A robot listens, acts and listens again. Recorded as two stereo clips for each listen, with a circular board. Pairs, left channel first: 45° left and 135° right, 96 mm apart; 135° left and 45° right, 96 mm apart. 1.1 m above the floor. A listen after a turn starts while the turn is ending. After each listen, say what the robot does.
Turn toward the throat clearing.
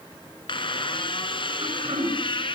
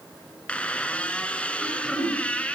Turn 140° right.
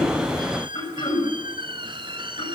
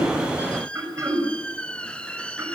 Turn 15° left.
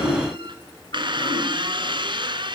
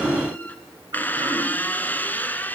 Keep listening.
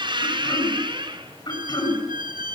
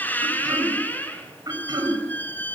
Found it: throat clearing, straight ahead.